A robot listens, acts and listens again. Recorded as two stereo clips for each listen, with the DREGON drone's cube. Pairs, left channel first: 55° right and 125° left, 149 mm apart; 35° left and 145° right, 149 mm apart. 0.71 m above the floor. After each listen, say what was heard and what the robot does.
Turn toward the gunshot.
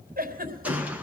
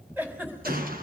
The gunshot: 155° right. Turn 155° right.
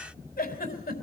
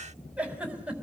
Facing where the gunshot came from. I can't hear it now.